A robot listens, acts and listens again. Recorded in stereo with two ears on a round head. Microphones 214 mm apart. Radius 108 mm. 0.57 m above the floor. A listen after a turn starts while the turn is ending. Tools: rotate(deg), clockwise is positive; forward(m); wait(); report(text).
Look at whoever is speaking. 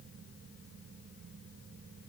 wait()
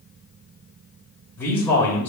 rotate(-30)
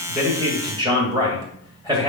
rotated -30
rotate(20)
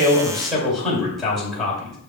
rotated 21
report("Found it: a man speaking, straight ahead.")